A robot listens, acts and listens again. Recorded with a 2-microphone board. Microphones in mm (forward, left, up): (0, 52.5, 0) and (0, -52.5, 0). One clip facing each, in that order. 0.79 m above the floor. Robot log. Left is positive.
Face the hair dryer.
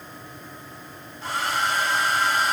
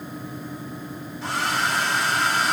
note: The hair dryer: about 70° right or 110° right.
cmd yaw -70
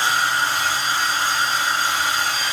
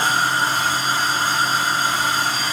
note: So it is at 40° right.
cmd yaw -40
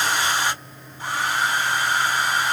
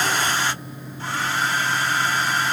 note: The hair dryer is now 15° left.
cmd yaw +15
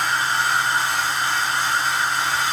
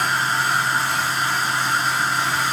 end: Facing the hair dryer.